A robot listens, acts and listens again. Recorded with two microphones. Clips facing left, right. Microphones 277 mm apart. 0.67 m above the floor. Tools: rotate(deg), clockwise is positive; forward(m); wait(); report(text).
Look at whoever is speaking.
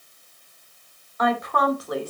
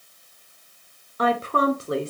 rotate(25)
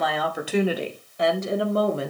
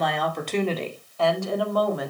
rotate(-30)
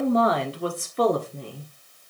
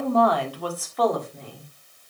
rotate(-40)
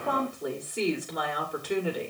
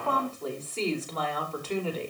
rotate(-15)
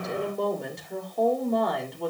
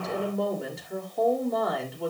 report("Found it: a woman speaking, straight ahead.")